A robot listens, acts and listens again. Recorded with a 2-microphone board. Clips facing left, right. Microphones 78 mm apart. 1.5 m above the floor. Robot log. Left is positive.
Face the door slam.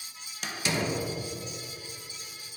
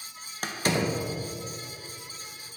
note: The door slam: about 45° right or 135° right.
cmd yaw -45
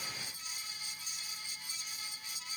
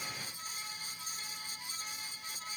cmd idle
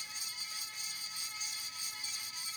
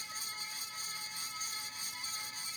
end: I heard a door slam, but can't make it out now. It was about straight ahead or 90° right.